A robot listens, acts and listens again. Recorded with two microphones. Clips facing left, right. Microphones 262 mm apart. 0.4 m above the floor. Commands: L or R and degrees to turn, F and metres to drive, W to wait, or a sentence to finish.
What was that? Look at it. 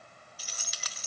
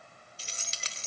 R25
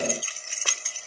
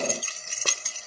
R120
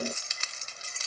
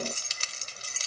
R45
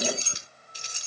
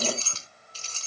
L20
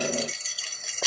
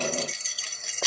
Found it: keys jangling, straight ahead.